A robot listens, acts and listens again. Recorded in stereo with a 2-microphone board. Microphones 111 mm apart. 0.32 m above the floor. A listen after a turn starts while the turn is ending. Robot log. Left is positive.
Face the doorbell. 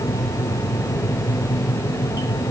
cmd idle
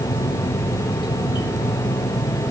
cmd idle
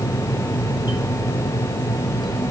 end: I can't make out a doorbell to turn to.